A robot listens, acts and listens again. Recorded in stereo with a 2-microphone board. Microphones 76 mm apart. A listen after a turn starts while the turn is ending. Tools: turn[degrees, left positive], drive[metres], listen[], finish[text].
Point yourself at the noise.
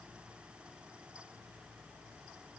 Action: listen[]
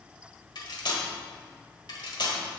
Thought: The cutlery clinking: about 75° left or 105° left.
Action: turn[75]
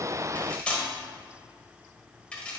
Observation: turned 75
Thought: So it is at 15° left.
Action: turn[15]
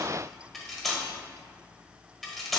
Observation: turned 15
Action: finish[Found it: cutlery clinking, straight ahead.]